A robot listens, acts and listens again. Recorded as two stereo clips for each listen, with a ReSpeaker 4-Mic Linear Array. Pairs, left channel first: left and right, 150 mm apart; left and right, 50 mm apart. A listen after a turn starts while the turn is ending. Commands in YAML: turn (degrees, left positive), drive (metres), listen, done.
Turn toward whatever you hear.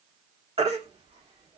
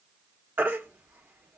turn: -40
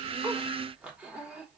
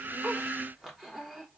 listen: true
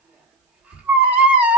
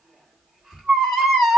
turn: -10
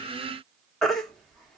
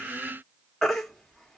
done: "Facing the baby crying."